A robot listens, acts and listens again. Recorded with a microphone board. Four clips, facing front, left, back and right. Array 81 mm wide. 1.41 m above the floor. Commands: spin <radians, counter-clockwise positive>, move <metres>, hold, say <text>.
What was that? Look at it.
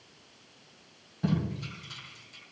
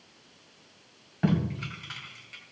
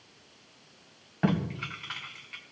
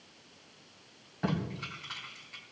spin 2.88
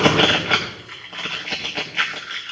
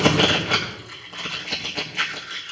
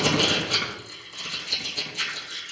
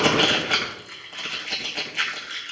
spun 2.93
say Facing the tape being pulled, 2 to 4 m away.